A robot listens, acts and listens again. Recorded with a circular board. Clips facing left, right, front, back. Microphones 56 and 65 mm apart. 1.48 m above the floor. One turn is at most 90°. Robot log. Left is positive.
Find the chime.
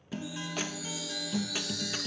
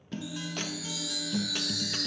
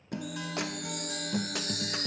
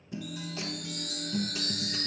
note: The chime: 80° right.
cmd yaw -80
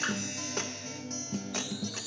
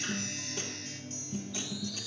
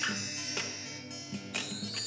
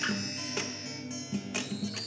cmd idle
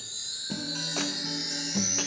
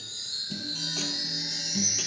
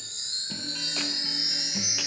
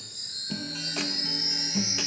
end: Facing the chime, 2 to 4 m away.